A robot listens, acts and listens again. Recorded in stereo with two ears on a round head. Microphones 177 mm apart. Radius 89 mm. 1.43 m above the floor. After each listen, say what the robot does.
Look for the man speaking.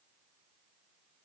Keep listening.
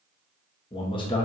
Turn 25° left.
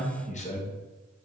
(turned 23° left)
Turn 35° left.
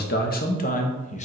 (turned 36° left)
Turn 35° left.
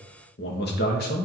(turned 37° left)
Turn 130° left.
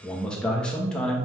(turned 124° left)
Facing the man speaking.